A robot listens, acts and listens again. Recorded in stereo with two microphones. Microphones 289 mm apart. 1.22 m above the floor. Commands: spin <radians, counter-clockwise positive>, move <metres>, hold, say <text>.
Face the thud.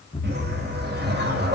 spin 0.35
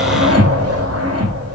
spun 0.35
hold
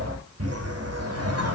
say I heard a thud, but can't make it out now. It was about straight ahead or 140° left.